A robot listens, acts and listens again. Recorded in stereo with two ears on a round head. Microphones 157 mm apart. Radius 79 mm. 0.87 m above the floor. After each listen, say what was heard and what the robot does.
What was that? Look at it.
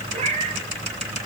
The cat meowing: about 35° right or 145° right. Turn 35° right.
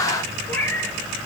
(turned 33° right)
So it is at 10° left. Turn 10° left.
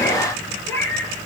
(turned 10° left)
The cat meowing is now 10° left. Turn 10° left.
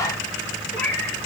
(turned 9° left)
The cat meowing is now 10° left. Turn 10° left.
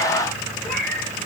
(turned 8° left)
Found it: a cat meowing, straight ahead, over 4 m away.